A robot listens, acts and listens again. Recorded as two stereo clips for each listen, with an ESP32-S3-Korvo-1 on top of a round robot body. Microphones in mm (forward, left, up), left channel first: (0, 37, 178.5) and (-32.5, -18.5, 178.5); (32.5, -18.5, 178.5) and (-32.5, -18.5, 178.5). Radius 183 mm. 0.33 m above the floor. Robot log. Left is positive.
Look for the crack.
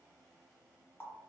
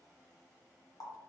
cmd idle
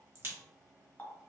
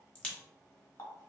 note: The crack: 70° right.
cmd yaw -70
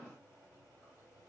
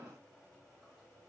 end: Facing where the crack came from. I can't hear it now.